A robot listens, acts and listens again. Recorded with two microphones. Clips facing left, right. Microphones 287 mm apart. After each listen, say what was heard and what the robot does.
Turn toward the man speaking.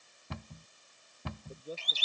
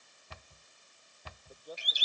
The man speaking: about 30° left or 150° left. Turn 30° left.
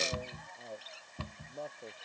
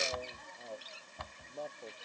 Found it: a man speaking, straight ahead.